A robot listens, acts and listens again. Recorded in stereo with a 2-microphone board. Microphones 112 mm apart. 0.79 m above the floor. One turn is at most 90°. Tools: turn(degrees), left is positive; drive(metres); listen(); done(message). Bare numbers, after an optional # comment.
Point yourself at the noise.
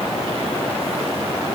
listen()
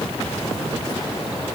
listen()
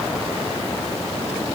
done("I can't make out anything to turn to.")